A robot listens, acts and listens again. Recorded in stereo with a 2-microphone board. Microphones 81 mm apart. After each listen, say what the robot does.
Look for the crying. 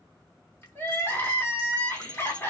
Turn 25° left.
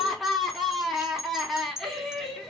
Found it: crying, straight ahead.